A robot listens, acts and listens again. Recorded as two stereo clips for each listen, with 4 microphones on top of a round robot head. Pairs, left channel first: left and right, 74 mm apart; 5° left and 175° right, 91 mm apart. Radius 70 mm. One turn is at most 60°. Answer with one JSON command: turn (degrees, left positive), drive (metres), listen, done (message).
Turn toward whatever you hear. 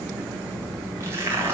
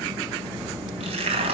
{"turn": -60}
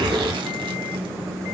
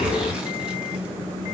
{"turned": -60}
{"turn": -60}
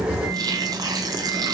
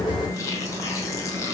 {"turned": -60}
{"turn": -35}
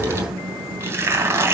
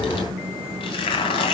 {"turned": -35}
{"turn": -35}
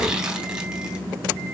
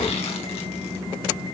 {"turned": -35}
{"listen": true}
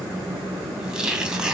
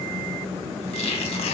{"turn": -10}
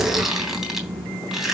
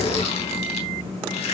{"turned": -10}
{"done": "Found it: tearing paper, straight ahead, 2 to 4 m away."}